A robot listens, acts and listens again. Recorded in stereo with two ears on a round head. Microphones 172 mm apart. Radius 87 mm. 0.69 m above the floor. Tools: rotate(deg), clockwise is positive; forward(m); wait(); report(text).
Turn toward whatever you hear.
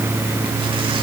wait()
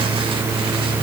wait()
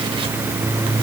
report("I can't make out anything.")